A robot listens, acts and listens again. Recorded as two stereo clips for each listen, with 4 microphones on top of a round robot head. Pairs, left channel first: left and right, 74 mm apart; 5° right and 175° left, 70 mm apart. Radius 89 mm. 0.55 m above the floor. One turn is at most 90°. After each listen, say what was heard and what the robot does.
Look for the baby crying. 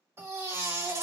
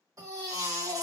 The baby crying: 145° right. Turn 90° right.
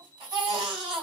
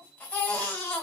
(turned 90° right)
The baby crying is now 80° right. Turn 80° right.
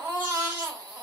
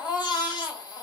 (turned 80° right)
The baby crying is now 20° right. Turn 20° right.
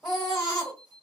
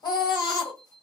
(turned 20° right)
Found it: a baby crying, straight ahead.